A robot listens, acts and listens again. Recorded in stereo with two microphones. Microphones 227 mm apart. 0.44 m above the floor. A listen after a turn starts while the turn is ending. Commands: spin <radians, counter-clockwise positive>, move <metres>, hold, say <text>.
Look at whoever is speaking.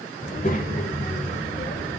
spin 0.70
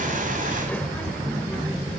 spin 0.17
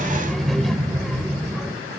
say Facing the child speaking, 1 to 2 m away.